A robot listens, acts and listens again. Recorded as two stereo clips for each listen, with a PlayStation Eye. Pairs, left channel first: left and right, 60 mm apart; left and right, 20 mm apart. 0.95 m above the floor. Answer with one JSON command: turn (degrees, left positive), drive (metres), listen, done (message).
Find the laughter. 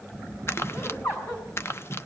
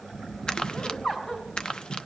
{"turn": 50}
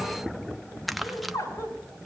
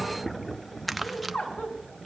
{"turn": 85}
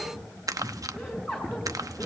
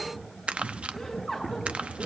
{"done": "Facing the laughter, over 4 m away."}